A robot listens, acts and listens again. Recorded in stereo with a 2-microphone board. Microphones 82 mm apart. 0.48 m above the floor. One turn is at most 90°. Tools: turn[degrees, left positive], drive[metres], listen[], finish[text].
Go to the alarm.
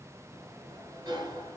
Action: listen[]
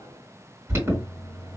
Thought: The alarm: about 35° right or 145° right.
Action: turn[-35]
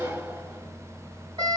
Thought: So it is at 110° right.
Action: turn[-90]
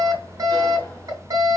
Thought: The alarm is now 50° right.
Action: turn[-50]
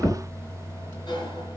Thought: The alarm is now 25° left.
Action: turn[25]
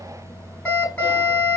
Thought: The alarm is now 20° left.
Action: turn[20]
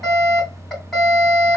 Action: drive[1.0]
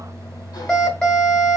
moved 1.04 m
Thought: The alarm is now 10° left.
Action: turn[10]
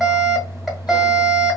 Action: drive[1.0]
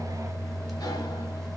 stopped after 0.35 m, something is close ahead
Action: finish[Arrived at the alarm, straight ahead.]